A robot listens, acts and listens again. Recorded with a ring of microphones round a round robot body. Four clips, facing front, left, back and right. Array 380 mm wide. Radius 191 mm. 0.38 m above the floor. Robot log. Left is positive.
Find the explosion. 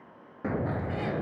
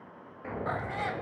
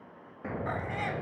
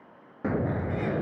note: The explosion: 70° right.
cmd yaw -70
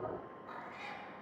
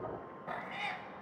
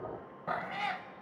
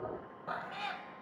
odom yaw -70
end: I heard an explosion from this way, but can't make it out now.